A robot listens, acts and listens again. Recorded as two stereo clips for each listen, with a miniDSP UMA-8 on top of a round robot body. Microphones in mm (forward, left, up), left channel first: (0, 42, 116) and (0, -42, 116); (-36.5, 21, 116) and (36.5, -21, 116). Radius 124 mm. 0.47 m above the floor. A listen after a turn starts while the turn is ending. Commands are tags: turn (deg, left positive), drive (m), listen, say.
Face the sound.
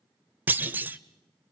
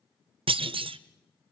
<turn deg="-25"/>
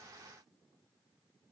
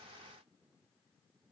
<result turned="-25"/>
<say>Facing where the clunk came from. I can't hear it now.</say>